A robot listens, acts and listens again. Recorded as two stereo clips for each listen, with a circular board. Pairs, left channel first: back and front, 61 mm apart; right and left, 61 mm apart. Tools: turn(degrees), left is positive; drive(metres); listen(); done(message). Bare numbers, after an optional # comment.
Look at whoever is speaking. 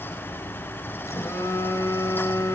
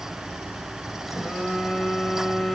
listen()
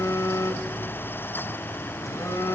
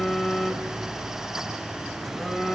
listen()
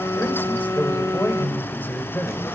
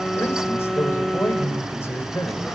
# The man speaking: 130° right.
turn(-130)
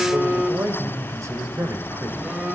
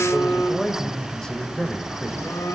# The man speaking is now 15° right.
turn(-15)
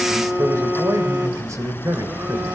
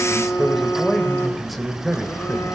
done("Found it: a man speaking, straight ahead, 2 to 4 m away.")